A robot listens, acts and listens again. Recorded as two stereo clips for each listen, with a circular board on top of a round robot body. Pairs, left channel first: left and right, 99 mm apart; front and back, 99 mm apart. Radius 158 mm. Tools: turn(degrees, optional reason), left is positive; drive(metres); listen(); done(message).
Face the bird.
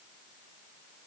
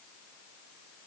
listen()
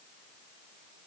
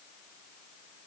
listen()
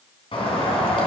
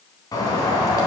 turn(degrees=55, reason="The bird: 55° left.")
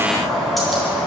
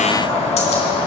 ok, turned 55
done("Facing the bird, 2 to 4 m away.")